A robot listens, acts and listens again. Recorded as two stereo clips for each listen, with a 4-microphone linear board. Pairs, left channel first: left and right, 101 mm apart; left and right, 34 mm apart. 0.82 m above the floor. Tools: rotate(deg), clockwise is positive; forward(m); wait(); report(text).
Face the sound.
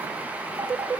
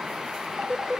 rotate(35)
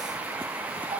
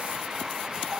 wait()
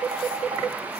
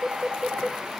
rotate(115)
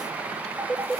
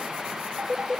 rotate(25)
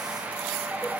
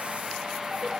wait()
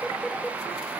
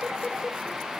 report("Found it: a phone ringing, straight ahead.")